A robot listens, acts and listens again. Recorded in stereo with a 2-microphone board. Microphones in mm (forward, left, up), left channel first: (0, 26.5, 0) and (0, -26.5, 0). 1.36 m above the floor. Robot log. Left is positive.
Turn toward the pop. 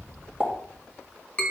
note: The pop: about 15° right or 165° right.
cmd yaw -15
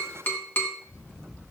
cmd idle
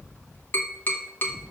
end: I heard a pop, but can't make it out now. It was about straight ahead or 150° right.